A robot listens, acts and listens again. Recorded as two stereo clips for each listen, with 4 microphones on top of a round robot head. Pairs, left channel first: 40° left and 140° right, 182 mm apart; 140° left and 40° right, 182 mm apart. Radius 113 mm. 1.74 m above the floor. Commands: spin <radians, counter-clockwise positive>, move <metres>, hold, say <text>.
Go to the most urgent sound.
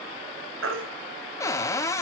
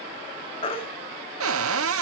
spin -2.79
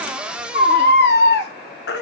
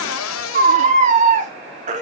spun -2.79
spin 0.17
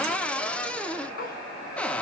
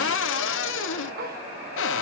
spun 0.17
move 1.0
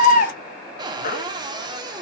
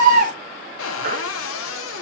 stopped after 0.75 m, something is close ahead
say Arrived at the baby crying, straight ahead.